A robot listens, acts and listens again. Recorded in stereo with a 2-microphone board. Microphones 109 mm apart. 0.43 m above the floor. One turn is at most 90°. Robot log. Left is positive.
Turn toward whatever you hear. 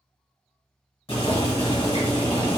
note: The boiling: about 55° left or 125° left.
cmd yaw +55
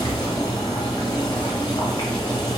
note: So it is at 55° left.
cmd yaw +55
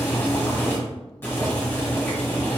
note: The boiling is now 25° left.
cmd yaw +25
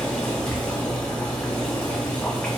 note: The boiling is now 15° left.
cmd yaw +15
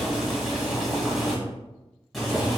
end: Facing the boiling.